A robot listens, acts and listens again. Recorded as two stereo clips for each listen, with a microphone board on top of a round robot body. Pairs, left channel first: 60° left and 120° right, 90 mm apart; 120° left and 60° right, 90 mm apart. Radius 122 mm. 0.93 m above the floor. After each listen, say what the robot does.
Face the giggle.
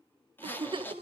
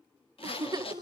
Turn 105° right.
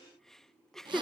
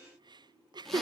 Turn 25° right.
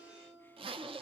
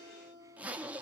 Keep listening.
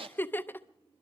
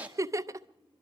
Facing the giggle.